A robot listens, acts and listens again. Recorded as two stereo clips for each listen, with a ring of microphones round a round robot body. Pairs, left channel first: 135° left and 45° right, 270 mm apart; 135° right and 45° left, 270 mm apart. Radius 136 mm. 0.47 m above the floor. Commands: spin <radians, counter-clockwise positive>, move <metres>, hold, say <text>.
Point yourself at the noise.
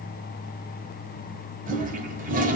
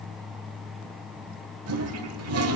spin 0.26
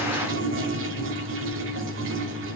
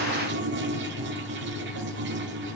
say Facing the toilet flushing.